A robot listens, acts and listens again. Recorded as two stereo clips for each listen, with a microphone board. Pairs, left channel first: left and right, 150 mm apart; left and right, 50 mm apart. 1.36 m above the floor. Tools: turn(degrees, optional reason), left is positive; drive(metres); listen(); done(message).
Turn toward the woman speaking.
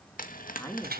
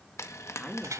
turn(degrees=15, reason="The woman speaking: about 15° left or 165° left.")
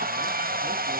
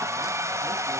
listen()
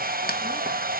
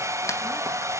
listen()
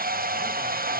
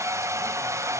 done("I heard a woman speaking, but can't make it out now. It was about straight ahead or 150° left.")